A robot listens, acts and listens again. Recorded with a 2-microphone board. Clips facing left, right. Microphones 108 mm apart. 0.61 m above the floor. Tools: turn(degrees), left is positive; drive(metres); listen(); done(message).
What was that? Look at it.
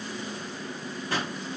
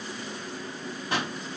turn(degrees=-20)
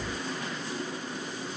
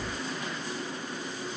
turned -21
listen()
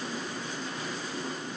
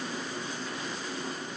done("I heard a pop, but can't make it out now. It was about straight ahead or 140° right.")